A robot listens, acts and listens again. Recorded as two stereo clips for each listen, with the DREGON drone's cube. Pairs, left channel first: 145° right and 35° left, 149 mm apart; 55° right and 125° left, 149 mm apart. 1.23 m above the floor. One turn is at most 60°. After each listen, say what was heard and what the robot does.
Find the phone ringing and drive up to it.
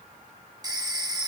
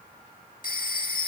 The phone ringing: 30° right. Turn 30° right.
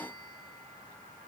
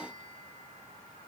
Keep listening.
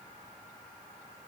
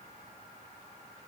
Keep listening.
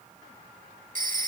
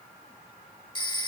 Drive 1.0 m forward.
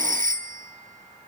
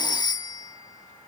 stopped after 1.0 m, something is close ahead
Arrived at the phone ringing, straight ahead.